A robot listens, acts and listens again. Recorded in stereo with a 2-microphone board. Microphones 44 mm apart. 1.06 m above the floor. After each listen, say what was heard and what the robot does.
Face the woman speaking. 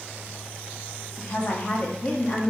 The woman speaking: about 20° left or 160° left. Turn 20° left.
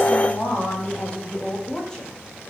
Turn 30° left.
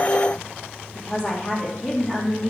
The woman speaking: about 15° left or 165° left. Turn 15° left.
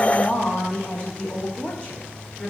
The woman speaking: about 30° left or 150° left. Turn 30° left.
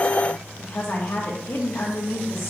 So it is at 120° left. Turn 120° left.
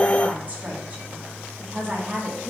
The woman speaking is now 30° right. Turn 30° right.
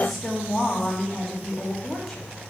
Facing the woman speaking.